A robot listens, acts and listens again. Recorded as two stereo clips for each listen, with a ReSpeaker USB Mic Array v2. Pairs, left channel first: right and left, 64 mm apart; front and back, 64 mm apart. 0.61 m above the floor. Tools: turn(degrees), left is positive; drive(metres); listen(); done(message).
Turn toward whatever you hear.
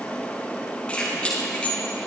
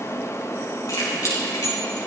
turn(degrees=-20)
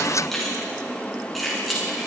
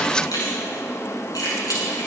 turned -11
done("Facing the keys jangling, over 4 m away.")